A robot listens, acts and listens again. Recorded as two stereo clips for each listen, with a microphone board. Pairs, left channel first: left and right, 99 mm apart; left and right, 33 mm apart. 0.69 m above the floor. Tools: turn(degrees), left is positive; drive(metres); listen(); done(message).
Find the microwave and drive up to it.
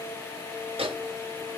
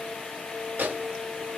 turn(degrees=-70)
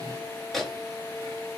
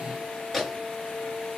drive(metres=1.0)
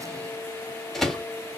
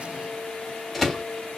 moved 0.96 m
drive(metres=1.0)
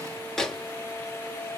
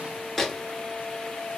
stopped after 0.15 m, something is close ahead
done("I am next to the microwave.")